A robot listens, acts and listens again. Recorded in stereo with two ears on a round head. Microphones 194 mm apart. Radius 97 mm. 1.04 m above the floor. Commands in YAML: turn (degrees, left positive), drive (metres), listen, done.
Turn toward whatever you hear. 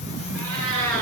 turn: -70
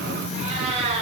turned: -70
turn: -30
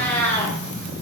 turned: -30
turn: 10
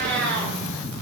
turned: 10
done: "Facing the cat meowing, over 4 m away."